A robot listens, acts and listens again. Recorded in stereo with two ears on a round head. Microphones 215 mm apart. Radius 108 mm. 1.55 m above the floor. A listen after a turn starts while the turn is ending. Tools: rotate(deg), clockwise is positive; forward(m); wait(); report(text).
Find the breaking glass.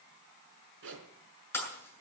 rotate(-30)
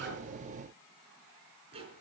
wait()
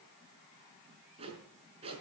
report("I heard breaking glass, but can't make it out now. It was about 20° right or 140° left.")